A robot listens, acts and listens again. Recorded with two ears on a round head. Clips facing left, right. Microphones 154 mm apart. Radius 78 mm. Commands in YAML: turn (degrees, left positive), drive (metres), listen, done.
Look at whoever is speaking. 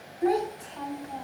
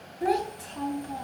turn: -45
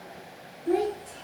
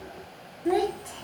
turn: -70
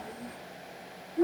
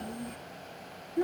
turn: -35
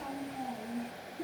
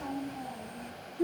done: "Found it: a child speaking, straight ahead."